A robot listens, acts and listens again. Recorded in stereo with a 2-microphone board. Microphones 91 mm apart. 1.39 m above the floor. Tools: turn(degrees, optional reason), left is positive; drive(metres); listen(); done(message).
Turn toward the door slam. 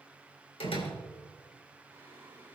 turn(degrees=90)
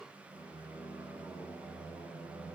done("Facing where the door slam came from. I can't hear it now.")